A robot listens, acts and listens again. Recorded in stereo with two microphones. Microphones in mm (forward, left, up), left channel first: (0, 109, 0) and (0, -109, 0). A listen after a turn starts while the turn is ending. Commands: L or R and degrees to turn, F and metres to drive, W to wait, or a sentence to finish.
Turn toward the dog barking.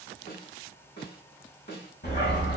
L55
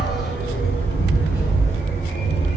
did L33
L55
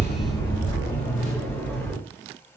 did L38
L10
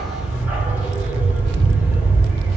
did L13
Facing the dog barking.